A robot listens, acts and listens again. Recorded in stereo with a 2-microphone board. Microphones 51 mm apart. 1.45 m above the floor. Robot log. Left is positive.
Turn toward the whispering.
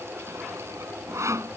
cmd idle
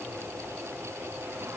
cmd idle
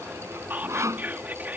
note: The whispering: about 35° right or 145° right.
cmd yaw -35
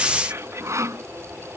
note: So it is at 110° right.
cmd yaw -110
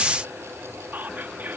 note: The whispering is now 40° right.
cmd yaw -40
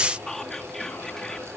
note: The whispering is now 10° left.
cmd yaw +10
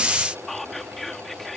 end: Facing the whispering.